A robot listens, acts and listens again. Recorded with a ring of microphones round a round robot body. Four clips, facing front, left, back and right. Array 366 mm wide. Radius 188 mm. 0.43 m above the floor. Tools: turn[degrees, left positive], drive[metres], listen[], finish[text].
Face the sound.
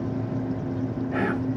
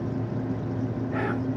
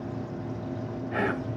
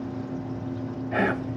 Thought: The whispering: 95° right.
Action: turn[-95]
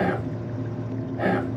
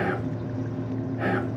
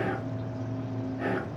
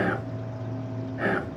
Thought: The whispering is now 20° right.
Action: turn[-20]
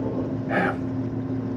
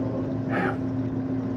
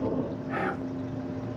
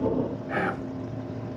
Action: finish[Facing the whispering.]